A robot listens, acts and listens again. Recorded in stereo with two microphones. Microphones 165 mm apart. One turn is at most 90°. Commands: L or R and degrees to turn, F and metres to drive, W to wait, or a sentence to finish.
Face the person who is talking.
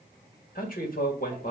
L55
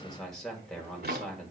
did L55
Found it: a man speaking, straight ahead, 2 to 4 m away.